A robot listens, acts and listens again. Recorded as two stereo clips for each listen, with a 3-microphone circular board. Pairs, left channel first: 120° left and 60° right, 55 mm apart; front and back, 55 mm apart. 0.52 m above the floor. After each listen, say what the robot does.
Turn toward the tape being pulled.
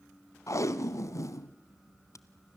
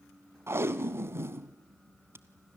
Turn 140° left.
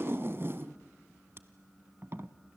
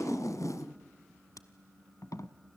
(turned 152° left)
Turn 15° right.
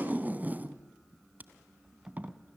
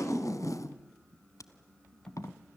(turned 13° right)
Facing the tape being pulled.